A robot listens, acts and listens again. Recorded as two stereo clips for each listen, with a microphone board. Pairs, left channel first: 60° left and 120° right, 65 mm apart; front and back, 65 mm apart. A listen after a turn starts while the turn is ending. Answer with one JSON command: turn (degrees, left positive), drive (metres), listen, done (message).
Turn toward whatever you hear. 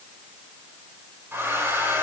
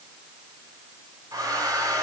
{"turn": -175}
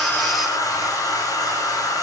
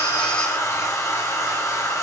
{"turn": 40}
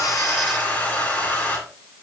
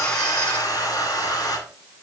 {"done": "Found it: a hair dryer, straight ahead, 2 to 4 m away."}